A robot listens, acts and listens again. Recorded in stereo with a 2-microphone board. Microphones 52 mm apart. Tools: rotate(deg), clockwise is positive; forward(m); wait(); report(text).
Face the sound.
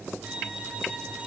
rotate(30)
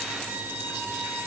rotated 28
rotate(125)
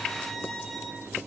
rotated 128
report("Facing the violin, over 4 m away.")